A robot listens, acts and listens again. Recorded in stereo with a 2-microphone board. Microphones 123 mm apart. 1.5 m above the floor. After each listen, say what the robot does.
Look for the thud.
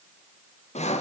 Keep listening.
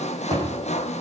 Turn 30° right.
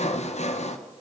Keep listening.
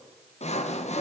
I heard a thud, but can't make it out now. It was about straight ahead or 120° right.